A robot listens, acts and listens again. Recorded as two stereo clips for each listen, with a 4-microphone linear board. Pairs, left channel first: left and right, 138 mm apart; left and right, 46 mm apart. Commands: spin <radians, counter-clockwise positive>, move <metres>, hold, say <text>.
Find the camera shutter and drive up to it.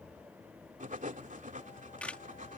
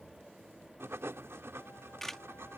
spin 0.52
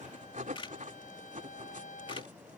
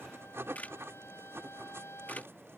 spin 2.44
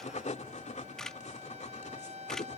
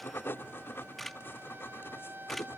move 1.0
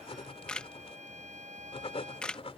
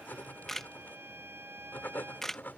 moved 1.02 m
move 1.0
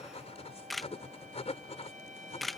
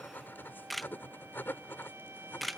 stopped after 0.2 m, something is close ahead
say Arrived at the camera shutter, straight ahead.